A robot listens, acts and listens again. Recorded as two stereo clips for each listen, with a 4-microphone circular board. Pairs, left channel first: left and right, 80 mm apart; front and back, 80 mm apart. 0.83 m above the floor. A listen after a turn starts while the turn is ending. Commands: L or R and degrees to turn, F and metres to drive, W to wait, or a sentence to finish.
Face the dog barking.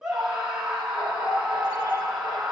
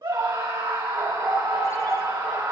L100
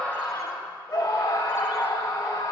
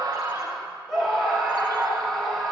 W
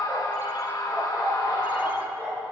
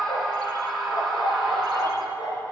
R30
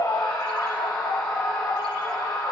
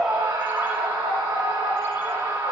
Found it: a dog barking, straight ahead, over 4 m away.